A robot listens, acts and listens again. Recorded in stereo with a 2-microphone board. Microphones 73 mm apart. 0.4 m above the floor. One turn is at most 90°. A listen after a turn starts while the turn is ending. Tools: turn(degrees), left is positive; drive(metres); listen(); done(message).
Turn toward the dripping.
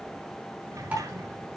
listen()
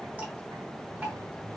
turn(degrees=-25)
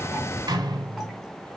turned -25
listen()
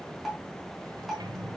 done("Facing the dripping, over 4 m away.")